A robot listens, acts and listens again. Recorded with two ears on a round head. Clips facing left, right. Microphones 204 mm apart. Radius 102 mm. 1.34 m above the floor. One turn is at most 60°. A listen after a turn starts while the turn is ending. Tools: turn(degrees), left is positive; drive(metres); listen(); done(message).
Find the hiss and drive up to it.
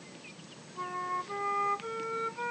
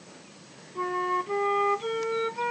listen()
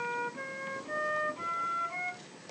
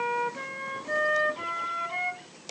listen()
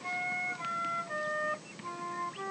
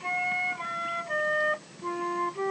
done("I can't make out a hiss to turn to.")